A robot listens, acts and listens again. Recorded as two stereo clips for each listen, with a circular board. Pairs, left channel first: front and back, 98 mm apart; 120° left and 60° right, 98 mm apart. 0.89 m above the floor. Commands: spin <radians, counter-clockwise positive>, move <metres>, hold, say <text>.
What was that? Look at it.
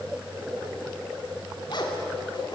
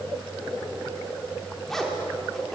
spin 0.61
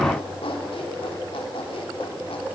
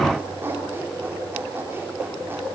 say Facing the zipper, 2 to 4 m away.